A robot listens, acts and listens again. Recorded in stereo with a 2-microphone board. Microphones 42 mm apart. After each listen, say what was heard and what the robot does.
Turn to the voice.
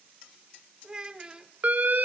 The child speaking: about 20° right or 160° right. Turn 20° right.
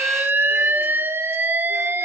Keep listening.
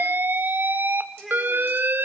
Found it: a child speaking, straight ahead, 1 to 2 m away.